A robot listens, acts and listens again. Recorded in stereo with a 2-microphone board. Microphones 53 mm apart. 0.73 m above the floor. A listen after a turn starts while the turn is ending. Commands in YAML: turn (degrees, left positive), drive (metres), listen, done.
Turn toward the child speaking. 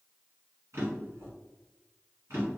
listen: true
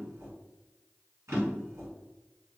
listen: true
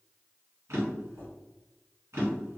done: "I can't make out a child speaking, only a drawer."